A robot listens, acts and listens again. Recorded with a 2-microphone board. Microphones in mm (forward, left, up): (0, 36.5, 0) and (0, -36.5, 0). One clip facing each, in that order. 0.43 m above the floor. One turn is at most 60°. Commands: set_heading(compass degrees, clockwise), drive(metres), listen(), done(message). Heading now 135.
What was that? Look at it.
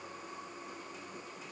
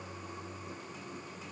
listen()
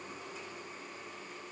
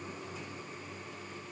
listen()
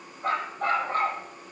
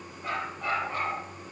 set_heading(90)
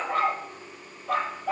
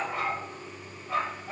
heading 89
set_heading(29)
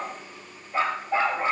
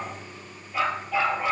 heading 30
set_heading(355)
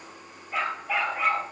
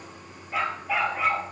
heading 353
done("Facing the dog barking, 2 to 4 m away.")